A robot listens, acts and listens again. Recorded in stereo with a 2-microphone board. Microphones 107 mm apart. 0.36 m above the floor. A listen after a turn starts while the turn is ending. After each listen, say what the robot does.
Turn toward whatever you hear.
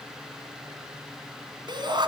Turn 45° right.
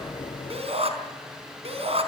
Turn 90° right.
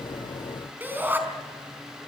Turn 20° right.
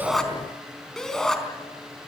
Facing the shout.